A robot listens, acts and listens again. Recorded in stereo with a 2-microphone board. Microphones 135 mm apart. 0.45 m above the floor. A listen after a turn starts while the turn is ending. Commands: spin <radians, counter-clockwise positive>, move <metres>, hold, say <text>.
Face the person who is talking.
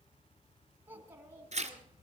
spin -0.35
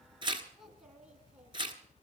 hold
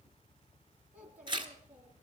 spin -0.52
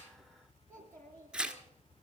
spin 0.26
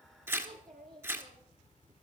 say Found it: a child speaking, straight ahead.